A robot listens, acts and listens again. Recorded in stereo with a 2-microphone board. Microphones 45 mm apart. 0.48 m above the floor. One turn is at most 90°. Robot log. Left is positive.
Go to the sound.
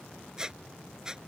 cmd yaw -30
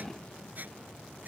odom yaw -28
note: So it is at 140° right.
cmd yaw -90
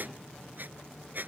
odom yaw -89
note: The squeak is now 50° right.
cmd yaw -50
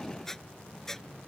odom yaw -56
cmd fwd 1.0
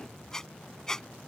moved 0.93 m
note: The squeak is now 10° left.
cmd yaw +10
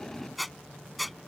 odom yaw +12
cmd fwd 1.0
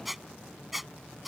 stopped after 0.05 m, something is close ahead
end: I am next to the squeak.